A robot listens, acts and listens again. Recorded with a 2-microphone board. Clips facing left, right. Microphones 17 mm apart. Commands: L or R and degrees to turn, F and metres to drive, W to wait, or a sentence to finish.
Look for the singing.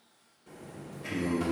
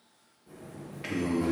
R65
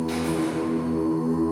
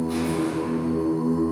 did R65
R15
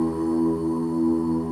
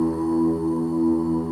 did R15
Facing the singing.